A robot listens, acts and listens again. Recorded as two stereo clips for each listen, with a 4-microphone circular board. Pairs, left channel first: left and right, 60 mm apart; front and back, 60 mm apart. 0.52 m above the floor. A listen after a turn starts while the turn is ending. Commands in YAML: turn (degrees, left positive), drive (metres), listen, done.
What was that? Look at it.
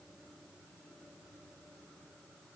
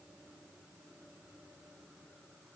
listen: true
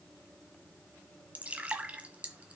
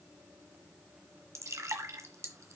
turn: -155
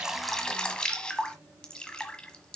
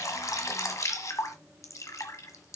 turn: 15
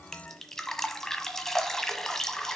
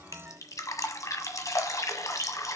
turn: 10
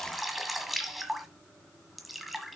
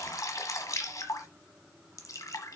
done: "Found it: dripping, straight ahead, 1 to 2 m away."